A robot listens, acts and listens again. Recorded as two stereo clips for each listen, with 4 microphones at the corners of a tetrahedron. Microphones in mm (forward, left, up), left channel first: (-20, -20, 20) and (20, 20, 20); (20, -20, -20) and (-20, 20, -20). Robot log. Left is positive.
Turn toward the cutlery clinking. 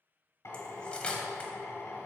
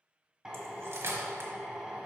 note: The cutlery clinking: 160° left.
cmd yaw +160
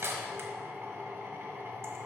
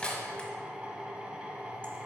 note: The cutlery clinking is now 20° left.
cmd yaw +20
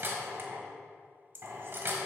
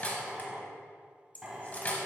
note: The cutlery clinking is now 10° left.
cmd yaw +10
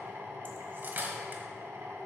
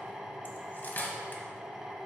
end: Found it: cutlery clinking, straight ahead.